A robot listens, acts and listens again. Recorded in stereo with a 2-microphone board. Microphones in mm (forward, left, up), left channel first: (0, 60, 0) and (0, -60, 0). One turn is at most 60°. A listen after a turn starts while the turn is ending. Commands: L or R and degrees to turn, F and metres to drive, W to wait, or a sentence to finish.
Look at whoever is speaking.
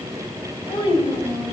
L50
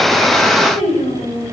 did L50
L60
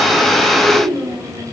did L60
Found it: a child speaking, straight ahead.